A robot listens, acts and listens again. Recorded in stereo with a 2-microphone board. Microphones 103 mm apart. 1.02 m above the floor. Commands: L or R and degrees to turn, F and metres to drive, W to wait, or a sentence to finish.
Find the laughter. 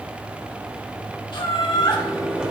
L45
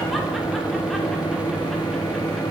W
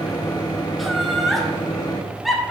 Found it: laughter, straight ahead.